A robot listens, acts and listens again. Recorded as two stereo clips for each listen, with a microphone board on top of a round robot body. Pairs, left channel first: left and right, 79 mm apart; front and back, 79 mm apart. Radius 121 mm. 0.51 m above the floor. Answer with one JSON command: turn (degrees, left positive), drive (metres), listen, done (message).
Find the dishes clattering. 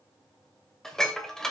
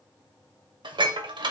{"turn": 175}
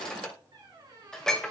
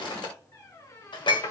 {"turn": 10}
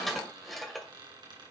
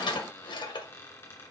{"done": "Facing the dishes clattering."}